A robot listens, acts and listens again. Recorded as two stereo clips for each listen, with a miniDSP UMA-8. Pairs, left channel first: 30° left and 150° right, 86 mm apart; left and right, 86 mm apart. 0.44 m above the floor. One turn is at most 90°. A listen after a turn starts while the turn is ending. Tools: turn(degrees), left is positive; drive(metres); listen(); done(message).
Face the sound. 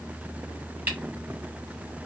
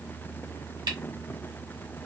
listen()
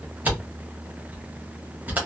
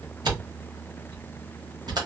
turn(degrees=-85)
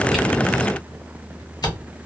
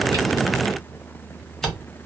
done("Facing the camera shutter, 1 to 2 m away.")